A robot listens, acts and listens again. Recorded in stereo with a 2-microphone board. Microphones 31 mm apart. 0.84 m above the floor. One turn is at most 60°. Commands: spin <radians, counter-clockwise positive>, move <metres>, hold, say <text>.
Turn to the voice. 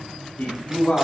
spin 1.05
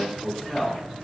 spin 0.17
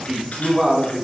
say Found it: a man speaking, straight ahead, 2 to 4 m away.